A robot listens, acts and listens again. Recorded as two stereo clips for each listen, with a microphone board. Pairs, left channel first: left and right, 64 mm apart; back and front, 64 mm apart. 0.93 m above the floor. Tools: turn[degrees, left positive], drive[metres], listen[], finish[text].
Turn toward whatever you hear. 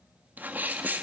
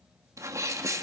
Thought: The sneeze: 30° right.
Action: turn[-30]
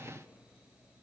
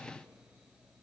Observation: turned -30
Action: finish[I heard a sneeze from this way, but can't make it out now.]